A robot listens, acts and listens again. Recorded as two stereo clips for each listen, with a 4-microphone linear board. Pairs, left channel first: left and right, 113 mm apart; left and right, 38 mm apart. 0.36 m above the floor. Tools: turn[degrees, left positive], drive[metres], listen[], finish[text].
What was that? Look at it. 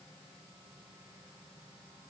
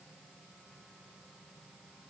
Action: listen[]
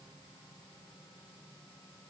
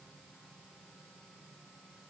Action: listen[]
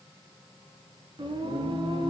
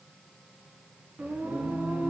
Thought: The singing: about 50° right or 130° right.
Action: turn[-50]
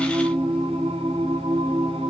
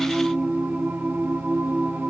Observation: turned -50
Thought: So it is at 70° right.
Action: turn[-70]
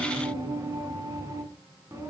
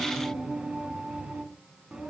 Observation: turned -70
Thought: The singing is now 25° right.
Action: turn[-25]
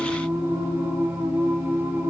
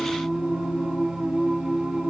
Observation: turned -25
Thought: The singing is now 20° right.
Action: turn[-20]
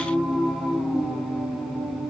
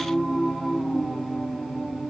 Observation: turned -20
Action: finish[Found it: singing, straight ahead.]